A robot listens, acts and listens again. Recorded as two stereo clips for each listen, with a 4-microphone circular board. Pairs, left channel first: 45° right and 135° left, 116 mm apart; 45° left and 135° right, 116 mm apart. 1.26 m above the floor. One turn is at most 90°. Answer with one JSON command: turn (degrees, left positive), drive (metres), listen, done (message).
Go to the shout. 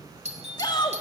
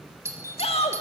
{"turn": 10}
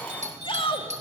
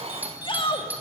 {"drive": 1.0}
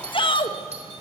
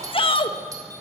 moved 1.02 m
{"drive": 1.0}
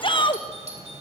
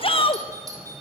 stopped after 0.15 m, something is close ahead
{"done": "Arrived at the shout, straight ahead."}